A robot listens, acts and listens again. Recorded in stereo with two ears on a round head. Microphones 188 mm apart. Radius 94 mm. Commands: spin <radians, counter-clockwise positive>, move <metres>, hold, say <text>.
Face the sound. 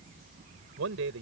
spin -1.13
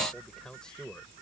say Facing the man speaking.